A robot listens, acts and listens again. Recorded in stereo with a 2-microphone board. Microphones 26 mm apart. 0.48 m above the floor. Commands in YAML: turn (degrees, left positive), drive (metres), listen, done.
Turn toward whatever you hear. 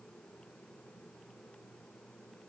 listen: true
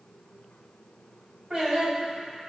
turn: -35
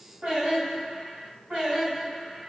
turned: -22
turn: -45
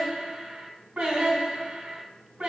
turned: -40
turn: -105
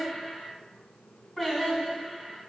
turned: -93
done: "Facing the singing."